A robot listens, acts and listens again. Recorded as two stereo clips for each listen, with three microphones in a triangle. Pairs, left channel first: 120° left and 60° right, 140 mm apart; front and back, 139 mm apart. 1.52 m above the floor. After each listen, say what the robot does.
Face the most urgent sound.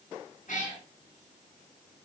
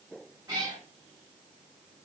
Keep listening.
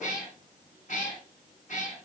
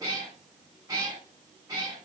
Keep listening.
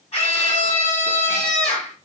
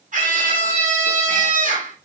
Turn 160° left.
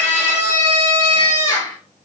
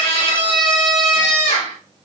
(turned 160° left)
Turn 50° left.
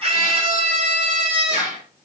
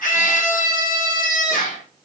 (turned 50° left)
Turn 15° right.
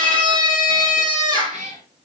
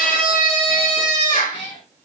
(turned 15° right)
Facing the scream.